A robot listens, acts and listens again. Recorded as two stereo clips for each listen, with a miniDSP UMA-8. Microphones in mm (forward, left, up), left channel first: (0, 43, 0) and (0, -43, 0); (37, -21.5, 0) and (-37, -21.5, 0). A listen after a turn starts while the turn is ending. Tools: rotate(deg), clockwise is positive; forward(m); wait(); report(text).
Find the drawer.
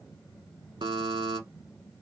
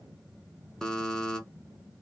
wait()
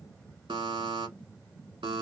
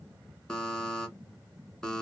wait()
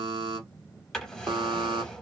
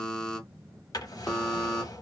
rotate(-10)
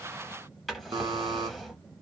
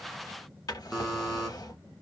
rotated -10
report("Found it: a drawer, straight ahead.")